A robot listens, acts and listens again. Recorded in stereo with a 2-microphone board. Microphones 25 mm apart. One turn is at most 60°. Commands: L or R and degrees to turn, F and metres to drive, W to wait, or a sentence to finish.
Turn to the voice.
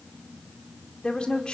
L35
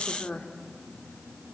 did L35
L60
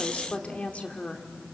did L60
L60
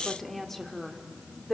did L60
L15
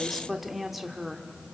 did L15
Facing the woman speaking.